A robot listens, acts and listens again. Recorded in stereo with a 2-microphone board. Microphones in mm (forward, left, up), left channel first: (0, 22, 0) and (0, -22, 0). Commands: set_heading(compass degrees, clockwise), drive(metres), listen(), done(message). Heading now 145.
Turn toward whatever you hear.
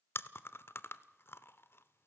set_heading(80)
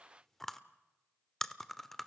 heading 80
done("Facing the chewing, 1 to 2 m away.")